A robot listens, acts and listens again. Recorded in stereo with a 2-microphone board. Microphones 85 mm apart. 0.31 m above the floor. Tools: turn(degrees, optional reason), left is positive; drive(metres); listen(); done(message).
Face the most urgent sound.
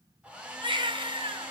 turn(degrees=-90)
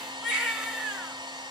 done("Found it: a baby crying, straight ahead.")